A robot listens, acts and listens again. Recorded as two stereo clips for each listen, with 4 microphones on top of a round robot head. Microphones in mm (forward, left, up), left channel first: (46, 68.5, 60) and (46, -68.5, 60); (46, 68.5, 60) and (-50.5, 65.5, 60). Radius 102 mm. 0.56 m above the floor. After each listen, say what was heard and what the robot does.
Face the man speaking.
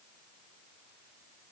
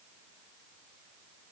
Keep listening.
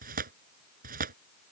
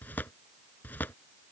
Keep listening.
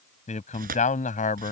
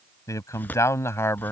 The man speaking: 65° left. Turn 65° left.
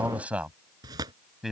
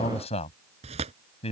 Facing the man speaking.